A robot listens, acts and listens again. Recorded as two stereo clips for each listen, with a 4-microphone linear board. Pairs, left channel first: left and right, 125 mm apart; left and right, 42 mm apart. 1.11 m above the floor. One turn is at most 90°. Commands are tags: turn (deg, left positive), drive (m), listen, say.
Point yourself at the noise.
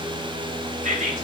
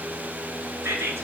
<turn deg="-90"/>
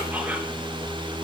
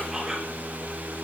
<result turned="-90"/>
<turn deg="-15"/>
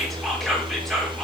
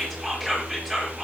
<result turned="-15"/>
<say>Facing the whispering.</say>